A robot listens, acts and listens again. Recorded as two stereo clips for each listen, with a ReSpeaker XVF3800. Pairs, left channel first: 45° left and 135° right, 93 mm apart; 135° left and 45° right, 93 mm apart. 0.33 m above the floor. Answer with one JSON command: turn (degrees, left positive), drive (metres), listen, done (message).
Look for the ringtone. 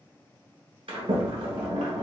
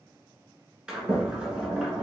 {"listen": true}
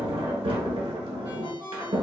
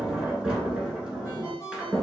{"turn": -170}
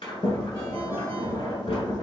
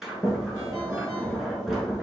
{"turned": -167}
{"listen": true}
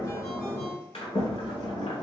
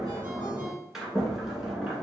{"listen": true}
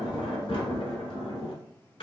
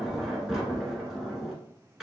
{"done": "I heard a ringtone from this way, but can't make it out now."}